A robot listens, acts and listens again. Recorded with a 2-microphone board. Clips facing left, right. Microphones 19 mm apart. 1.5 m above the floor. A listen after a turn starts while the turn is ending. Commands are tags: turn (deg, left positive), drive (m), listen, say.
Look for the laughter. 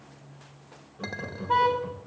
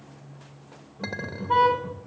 <turn deg="70"/>
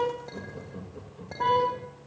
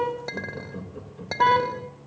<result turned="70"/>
<turn deg="-15"/>
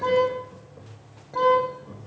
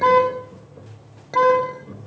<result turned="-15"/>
<say>Found it: laughter, straight ahead, over 4 m away.</say>